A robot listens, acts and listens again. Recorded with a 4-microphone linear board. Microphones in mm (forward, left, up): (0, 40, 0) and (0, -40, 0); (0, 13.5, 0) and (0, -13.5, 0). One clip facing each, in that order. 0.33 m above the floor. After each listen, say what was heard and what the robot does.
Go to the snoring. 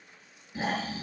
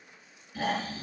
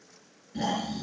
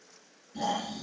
The snoring: about 25° left or 155° left. Turn 25° left.
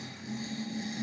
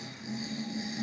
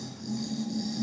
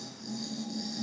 Drive 1.0 m forward.
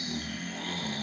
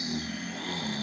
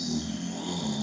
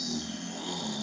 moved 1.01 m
Drive 1.0 m forward.
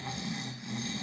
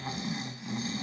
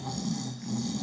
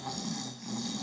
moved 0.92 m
The snoring is now 10° right. Turn 10° right.
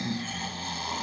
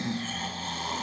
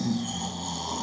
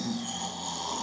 Drive 1.0 m forward.
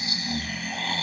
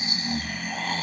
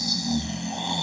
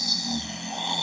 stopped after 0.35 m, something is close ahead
Arrived at the snoring, straight ahead.